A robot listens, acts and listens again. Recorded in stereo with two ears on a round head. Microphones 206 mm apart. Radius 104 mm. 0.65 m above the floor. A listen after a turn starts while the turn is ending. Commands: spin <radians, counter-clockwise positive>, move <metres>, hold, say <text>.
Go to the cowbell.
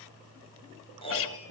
hold
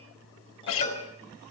spin 0.52
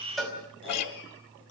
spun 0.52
move 1.0
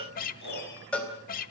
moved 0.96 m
move 1.0
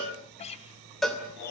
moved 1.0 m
move 1.0
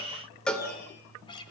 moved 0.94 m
move 1.0
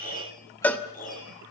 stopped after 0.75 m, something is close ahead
spin 0.17
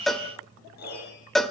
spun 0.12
say I am next to the cowbell.